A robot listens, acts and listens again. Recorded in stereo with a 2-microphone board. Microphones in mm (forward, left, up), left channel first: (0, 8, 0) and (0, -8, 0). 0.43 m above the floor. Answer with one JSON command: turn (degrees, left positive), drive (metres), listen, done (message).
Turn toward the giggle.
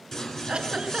{"turn": -90}
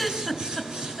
{"done": "Facing the giggle."}